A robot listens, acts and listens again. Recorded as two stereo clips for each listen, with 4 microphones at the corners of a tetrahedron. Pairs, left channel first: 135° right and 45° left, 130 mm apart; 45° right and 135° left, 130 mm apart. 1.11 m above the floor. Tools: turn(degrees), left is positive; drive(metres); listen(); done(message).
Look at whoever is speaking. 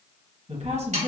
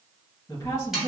turn(degrees=15)
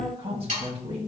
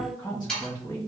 turn(degrees=10)
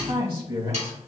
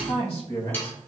done("Found it: a woman speaking, straight ahead.")